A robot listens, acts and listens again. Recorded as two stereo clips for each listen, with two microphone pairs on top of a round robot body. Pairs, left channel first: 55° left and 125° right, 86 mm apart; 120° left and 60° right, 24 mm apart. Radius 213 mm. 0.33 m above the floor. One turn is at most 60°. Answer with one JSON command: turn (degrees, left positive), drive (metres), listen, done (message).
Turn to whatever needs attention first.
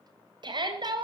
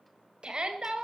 {"turn": -60}
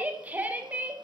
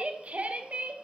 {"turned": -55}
{"turn": -55}
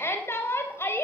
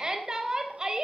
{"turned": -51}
{"done": "Facing the shout."}